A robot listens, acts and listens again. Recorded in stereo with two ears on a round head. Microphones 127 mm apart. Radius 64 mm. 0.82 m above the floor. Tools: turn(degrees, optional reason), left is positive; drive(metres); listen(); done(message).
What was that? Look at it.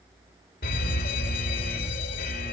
turn(degrees=65, reason="The fire alarm: about 65° left or 115° left.")
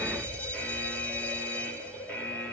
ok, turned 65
turn(degrees=10, reason="So it is at 10° left.")
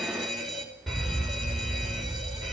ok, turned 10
done("Facing the fire alarm.")